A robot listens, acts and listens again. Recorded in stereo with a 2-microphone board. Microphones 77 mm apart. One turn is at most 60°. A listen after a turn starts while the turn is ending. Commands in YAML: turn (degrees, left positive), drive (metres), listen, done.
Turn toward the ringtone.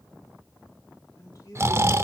listen: true
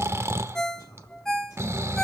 turn: 30
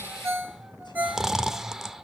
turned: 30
turn: -25
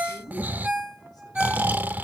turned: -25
turn: -10
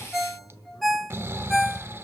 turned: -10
done: "Found it: a ringtone, straight ahead, 1 to 2 m away."